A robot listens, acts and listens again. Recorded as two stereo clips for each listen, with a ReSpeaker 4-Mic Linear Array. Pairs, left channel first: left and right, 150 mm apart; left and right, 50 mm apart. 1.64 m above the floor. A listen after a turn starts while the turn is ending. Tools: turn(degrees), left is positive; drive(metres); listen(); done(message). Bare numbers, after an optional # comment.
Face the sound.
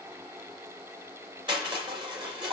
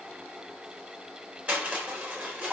# The crushing: about 30° right or 150° right.
turn(-30)
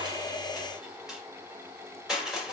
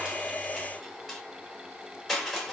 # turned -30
done("Found it: crushing, straight ahead.")